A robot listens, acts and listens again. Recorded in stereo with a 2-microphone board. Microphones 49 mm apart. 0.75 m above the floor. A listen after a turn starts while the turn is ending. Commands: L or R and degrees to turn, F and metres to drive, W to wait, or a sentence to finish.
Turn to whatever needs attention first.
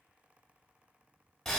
W
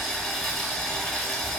W
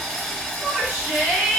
R35
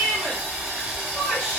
W
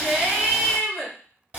Found it: a shout, straight ahead, 1 to 2 m away.